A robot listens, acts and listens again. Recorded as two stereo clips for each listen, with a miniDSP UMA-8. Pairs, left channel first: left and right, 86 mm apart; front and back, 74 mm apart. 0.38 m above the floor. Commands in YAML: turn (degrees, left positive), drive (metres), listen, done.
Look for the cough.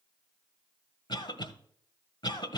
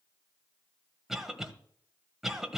turn: 95
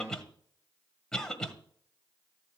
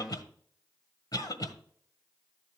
done: "Found it: a cough, straight ahead, 1 to 2 m away."